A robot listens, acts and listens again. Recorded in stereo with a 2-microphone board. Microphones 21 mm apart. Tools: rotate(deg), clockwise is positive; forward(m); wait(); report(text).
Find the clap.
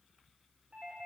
wait()
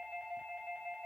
wait()
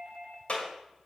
rotate(-70)
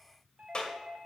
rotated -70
rotate(-40)
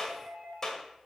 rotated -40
rotate(-20)
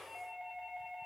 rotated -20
wait()
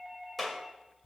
report("Found it: a clap, straight ahead.")